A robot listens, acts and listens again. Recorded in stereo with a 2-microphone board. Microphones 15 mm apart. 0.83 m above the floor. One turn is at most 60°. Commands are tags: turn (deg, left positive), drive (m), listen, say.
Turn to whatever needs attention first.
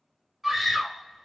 <turn deg="30"/>
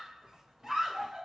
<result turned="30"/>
<turn deg="-30"/>
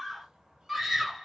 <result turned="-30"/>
<say>Found it: a scream, straight ahead.</say>